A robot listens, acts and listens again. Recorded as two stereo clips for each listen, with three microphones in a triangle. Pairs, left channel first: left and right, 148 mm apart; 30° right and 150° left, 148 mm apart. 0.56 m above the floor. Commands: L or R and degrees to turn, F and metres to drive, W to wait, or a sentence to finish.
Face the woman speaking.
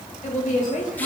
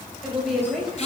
L60
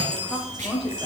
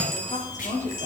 Facing the woman speaking, 2 to 4 m away.